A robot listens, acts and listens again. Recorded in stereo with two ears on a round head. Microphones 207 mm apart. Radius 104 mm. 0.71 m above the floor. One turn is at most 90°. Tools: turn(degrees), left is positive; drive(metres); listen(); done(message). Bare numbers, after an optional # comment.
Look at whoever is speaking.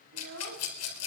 # The child speaking: about 70° right or 110° right.
turn(-70)
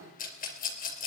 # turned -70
listen()
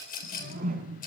listen()
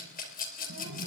done("I heard a child speaking, but can't make it out now. It was about straight ahead or 40° right.")